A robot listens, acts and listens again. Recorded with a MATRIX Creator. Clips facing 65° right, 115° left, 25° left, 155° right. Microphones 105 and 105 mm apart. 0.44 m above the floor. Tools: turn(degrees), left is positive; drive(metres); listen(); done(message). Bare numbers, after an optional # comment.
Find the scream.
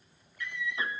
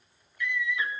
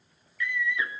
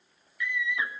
# The scream: 85° right.
turn(-85)
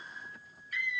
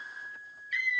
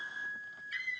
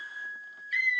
# The scream is now 25° right.
turn(-25)
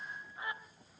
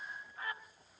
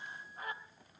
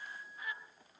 done("Found it: a scream, straight ahead, 2 to 4 m away.")